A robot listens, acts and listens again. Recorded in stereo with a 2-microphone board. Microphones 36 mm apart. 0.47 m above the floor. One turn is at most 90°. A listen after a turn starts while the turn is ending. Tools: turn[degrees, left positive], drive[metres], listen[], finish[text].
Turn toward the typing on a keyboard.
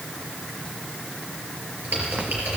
Thought: The typing on a keyboard: about 55° right or 125° right.
Action: turn[-55]
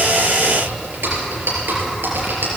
Thought: So it is at 70° right.
Action: turn[-70]
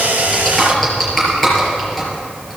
Action: finish[Found it: typing on a keyboard, straight ahead, over 4 m away.]